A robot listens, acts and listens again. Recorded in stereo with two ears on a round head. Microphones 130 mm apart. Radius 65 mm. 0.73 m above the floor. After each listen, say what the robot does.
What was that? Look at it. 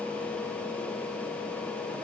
Keep listening.
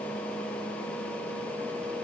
Keep listening.
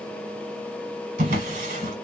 Turn 50° right.
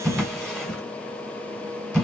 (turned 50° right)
Found it: a drawer, straight ahead, 1 to 2 m away.